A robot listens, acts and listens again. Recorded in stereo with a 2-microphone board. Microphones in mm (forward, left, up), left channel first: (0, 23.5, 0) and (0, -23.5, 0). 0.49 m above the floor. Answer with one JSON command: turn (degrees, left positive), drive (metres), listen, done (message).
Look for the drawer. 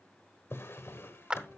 {"turn": 65}
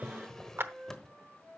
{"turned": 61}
{"turn": 10}
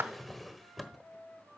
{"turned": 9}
{"done": "Found it: a drawer, straight ahead, 1 to 2 m away."}